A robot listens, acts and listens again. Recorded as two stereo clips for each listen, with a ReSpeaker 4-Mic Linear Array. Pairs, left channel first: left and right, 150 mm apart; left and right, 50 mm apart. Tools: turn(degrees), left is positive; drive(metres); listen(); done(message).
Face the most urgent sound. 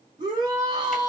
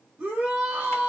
turn(degrees=-30)
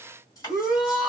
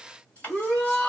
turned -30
done("Facing the shout, 1 to 2 m away.")